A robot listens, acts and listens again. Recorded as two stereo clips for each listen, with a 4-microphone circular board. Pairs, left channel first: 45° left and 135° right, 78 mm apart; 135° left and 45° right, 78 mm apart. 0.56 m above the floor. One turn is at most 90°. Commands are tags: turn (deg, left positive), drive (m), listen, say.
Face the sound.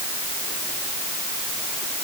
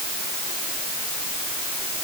<listen/>
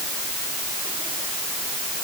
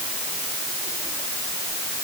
<listen/>
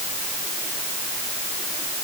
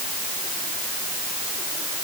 <say>I can't make out anything to turn to.</say>